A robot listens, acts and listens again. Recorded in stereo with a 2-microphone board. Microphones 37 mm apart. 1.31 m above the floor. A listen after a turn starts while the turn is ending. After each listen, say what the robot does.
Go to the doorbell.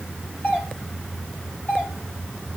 Turn 55° left.
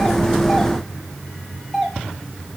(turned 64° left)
Drive 1.0 m forward.
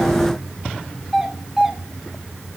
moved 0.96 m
Turn 10° right.
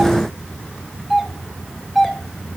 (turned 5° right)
Drive 1.0 m forward.
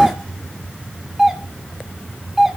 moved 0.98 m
Turn 10° right.
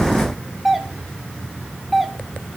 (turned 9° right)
Drive 1.0 m forward.
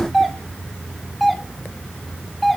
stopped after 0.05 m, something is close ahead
Arrived at the doorbell, straight ahead.